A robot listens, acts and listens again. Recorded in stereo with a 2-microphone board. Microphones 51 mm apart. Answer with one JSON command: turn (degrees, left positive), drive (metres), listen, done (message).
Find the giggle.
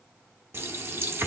{"listen": true}
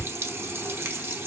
{"listen": true}
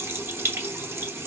{"done": "I can't make out a giggle, only a running tap."}